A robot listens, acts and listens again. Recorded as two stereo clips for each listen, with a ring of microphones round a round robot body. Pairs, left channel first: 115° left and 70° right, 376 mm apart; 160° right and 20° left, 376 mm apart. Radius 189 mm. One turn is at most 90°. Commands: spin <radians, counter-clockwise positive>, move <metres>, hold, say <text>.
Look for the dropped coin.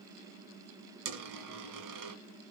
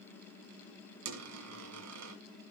spin -0.44
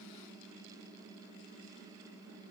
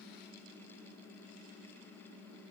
say Facing where the dropped coin came from. I can't hear it now.